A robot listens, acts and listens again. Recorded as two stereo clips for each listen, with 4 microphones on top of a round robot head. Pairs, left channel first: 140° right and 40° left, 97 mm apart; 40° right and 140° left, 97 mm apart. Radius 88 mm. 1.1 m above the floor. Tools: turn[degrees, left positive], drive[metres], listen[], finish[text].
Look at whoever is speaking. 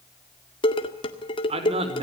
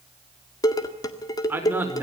Thought: The man speaking: 65° left.
Action: turn[65]
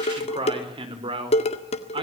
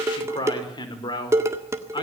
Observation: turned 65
Action: finish[Facing the man speaking, over 4 m away.]